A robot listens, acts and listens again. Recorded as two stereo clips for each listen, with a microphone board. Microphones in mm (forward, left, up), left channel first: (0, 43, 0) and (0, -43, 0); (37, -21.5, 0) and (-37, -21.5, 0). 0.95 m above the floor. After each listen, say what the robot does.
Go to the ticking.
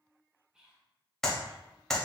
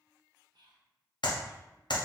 Keep listening.
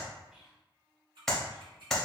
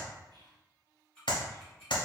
Turn 75° right.
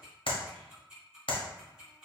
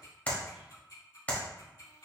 Turn 10° right.
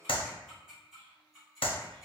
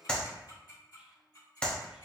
Drive 1.0 m forward.
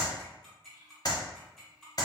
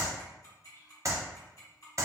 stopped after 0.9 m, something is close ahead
I am next to the ticking.